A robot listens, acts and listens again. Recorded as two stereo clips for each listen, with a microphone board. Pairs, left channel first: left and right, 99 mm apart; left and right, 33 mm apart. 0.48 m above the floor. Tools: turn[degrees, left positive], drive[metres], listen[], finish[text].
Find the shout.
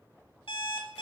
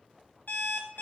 Action: listen[]
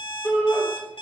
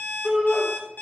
Thought: The shout: about 20° left or 160° left.
Action: turn[20]
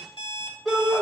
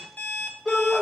Action: finish[Facing the shout.]